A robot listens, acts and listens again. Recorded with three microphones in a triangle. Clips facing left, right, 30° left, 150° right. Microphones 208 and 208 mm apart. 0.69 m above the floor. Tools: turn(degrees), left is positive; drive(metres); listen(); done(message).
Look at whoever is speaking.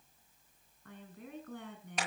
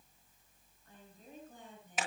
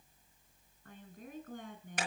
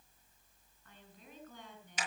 turn(degrees=70)
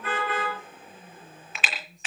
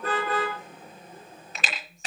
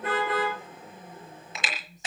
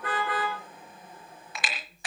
listen()
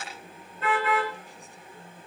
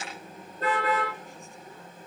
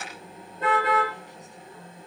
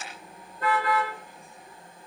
turn(degrees=35)
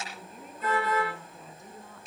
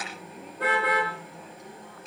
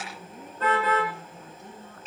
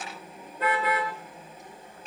listen()
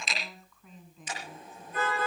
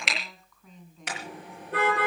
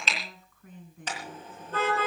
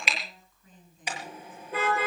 done("Found it: a woman speaking, straight ahead, over 4 m away.")